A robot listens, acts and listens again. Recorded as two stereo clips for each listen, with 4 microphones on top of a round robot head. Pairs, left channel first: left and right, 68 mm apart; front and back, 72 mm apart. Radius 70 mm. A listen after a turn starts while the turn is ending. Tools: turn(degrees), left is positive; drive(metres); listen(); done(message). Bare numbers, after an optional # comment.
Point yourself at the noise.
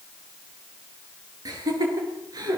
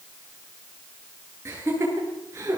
# The laughter: 115° right.
turn(-115)
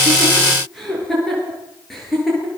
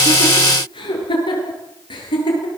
done("Found it: laughter, straight ahead.")